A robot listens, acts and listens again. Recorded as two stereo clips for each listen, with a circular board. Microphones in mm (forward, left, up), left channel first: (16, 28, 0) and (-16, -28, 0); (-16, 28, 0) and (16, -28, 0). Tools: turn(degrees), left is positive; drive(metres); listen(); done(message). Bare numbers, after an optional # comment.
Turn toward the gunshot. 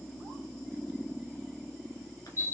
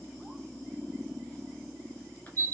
listen()
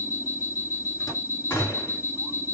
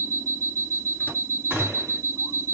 done("Facing the gunshot, 2 to 4 m away.")